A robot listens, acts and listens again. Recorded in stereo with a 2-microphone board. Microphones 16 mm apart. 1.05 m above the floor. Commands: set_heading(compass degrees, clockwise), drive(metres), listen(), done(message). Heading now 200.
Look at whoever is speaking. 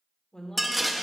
set_heading(155)
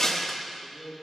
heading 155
set_heading(65)
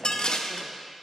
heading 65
listen()
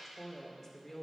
set_heading(50)
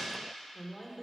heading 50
done("Found it: a woman speaking, straight ahead, 2 to 4 m away.")